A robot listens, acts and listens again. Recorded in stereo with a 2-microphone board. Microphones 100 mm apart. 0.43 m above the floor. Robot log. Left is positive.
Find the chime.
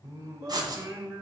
cmd idle
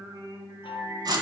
note: The chime: about 55° left or 125° left.
cmd yaw +55
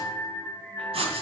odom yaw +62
cmd idle
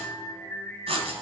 cmd idle
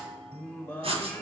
note: So it is at 10° left.
cmd yaw +10
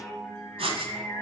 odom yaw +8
end: Facing the chime, 1 to 2 m away.